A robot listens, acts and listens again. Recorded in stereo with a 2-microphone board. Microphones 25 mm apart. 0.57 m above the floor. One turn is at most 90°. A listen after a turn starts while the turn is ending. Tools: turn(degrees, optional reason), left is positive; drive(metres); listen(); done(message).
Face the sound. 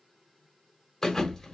turn(degrees=30)
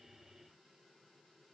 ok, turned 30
listen()
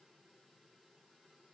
done("I heard a thud, but can't make it out now. It was about 15° right or 135° left.")